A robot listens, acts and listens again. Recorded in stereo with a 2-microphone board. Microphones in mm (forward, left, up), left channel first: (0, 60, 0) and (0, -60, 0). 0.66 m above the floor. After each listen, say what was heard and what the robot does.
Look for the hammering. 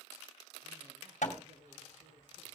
The hammering: about 75° left or 105° left. Turn 75° left.
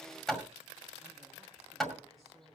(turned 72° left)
Facing the hammering.